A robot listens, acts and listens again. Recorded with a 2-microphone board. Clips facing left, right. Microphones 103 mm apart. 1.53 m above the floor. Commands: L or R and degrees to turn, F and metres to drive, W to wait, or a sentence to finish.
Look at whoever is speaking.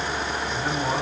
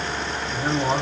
R25
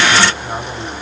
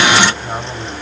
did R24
Facing the man speaking.